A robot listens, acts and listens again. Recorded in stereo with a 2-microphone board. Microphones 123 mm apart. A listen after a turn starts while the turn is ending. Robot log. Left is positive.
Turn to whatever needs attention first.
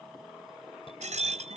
note: The fire alarm: about 50° left or 130° left.
cmd yaw +50
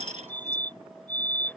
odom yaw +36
note: So it is at 15° left.
cmd yaw +15
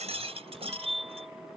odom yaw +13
end: Found it: a fire alarm, straight ahead.